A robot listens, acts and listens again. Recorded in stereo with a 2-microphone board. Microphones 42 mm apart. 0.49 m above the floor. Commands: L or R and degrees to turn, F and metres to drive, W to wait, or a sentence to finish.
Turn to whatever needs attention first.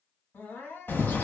L70
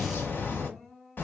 L15
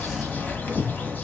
W
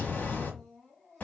Facing the crying.